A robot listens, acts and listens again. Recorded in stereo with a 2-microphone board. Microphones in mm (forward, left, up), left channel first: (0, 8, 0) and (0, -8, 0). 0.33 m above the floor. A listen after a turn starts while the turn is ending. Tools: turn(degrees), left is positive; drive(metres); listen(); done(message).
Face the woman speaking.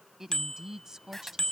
turn(degrees=-40)
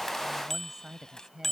turn(degrees=-40)
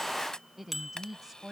turn(degrees=-30)
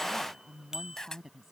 turn(degrees=-25)
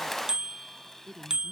turn(degrees=-15)
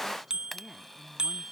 done("Found it: a woman speaking, straight ahead.")